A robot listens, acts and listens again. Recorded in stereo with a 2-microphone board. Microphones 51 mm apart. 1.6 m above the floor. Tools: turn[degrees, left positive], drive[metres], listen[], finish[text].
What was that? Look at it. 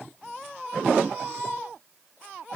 Action: listen[]
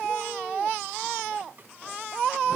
Action: listen[]
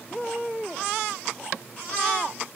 Action: finish[I can't make out anything.]